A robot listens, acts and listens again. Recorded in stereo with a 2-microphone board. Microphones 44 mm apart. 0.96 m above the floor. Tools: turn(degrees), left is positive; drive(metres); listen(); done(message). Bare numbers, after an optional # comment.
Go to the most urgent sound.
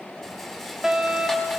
turn(-30)
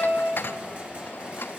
# So it is at 20° left.
turn(20)
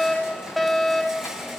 drive(1.0)
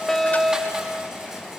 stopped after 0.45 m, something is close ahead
done("Blocked. The fire alarm is further on, straight ahead.")